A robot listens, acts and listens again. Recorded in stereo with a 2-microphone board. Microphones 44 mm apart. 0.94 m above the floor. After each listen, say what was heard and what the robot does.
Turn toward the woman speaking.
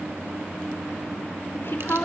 The woman speaking: about 55° left or 125° left. Turn 55° left.
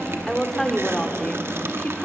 So it is at 25° left. Turn 25° left.
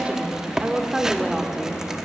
Facing the woman speaking, 2 to 4 m away.